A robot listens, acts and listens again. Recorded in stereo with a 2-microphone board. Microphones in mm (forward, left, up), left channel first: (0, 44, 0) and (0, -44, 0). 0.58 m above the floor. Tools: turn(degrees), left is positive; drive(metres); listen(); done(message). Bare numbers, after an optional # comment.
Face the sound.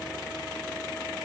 listen()
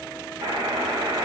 # The buzzer: about 75° right or 105° right.
turn(-75)
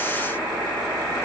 done("Found it: a buzzer, straight ahead.")